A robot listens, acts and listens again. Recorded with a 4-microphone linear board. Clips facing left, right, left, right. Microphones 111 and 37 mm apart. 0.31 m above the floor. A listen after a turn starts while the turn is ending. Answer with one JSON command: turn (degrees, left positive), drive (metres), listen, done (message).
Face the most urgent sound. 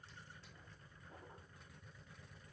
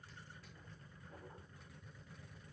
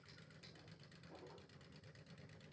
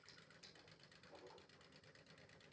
{"listen": true}
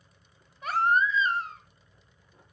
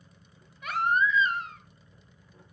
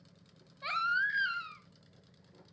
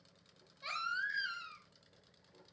{"turn": 35}
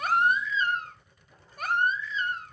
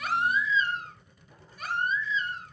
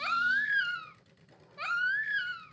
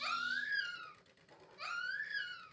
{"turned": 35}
{"turn": 100}
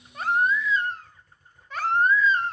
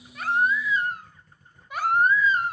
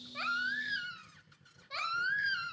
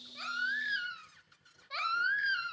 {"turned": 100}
{"turn": -15}
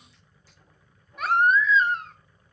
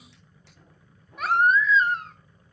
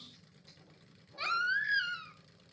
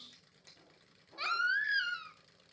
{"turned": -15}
{"done": "Facing the baby crying."}